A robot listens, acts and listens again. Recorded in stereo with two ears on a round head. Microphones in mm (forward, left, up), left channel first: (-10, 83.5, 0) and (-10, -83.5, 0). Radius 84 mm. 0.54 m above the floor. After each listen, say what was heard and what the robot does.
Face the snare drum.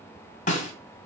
The snare drum: about 40° left or 140° left. Turn 40° left.
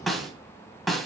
Found it: a snare drum, straight ahead.